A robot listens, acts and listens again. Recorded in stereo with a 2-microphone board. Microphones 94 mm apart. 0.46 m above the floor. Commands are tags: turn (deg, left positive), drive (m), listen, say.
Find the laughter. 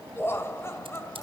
<turn deg="25"/>
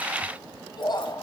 <turn deg="125"/>
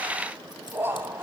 <turn deg="-20"/>
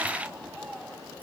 <say>Facing the laughter, 2 to 4 m away.</say>